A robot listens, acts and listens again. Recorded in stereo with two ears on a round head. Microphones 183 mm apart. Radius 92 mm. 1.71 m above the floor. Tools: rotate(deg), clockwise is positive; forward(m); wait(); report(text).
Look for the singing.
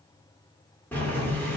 wait()
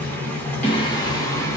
rotate(-30)
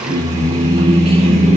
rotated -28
rotate(30)
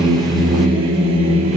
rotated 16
rotate(30)
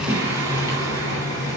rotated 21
rotate(10)
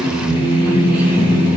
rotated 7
report("Found it: singing, straight ahead, 2 to 4 m away.")